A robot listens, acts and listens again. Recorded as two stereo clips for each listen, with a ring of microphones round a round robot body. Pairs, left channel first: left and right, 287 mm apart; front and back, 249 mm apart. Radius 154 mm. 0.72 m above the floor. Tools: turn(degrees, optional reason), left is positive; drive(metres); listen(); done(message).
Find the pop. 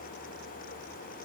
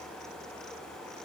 listen()
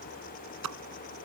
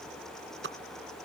turn(degrees=-125, reason="The pop: 125° right.")
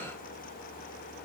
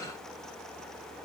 done("Facing where the pop came from. I can't hear it now.")